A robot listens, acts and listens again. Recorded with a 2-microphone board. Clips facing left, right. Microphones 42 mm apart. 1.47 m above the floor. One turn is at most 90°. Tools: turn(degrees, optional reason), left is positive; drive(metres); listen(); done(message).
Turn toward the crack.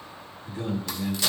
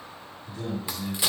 turn(degrees=-20, reason="The crack: about 20° right or 160° right.")
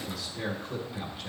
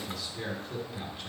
listen()
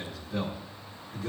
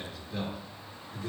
done("I heard a crack, but can't make it out now. It was about straight ahead or 140° right.")